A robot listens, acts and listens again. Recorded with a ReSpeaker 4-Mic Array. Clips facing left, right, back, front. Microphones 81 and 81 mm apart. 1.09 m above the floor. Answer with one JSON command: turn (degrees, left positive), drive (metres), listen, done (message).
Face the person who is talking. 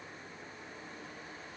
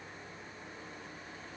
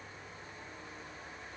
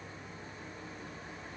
{"listen": true}
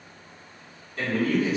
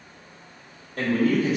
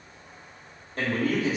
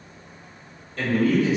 {"turn": -125}
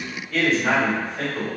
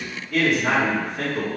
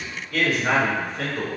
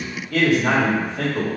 {"done": "Facing the man speaking, 1 to 2 m away."}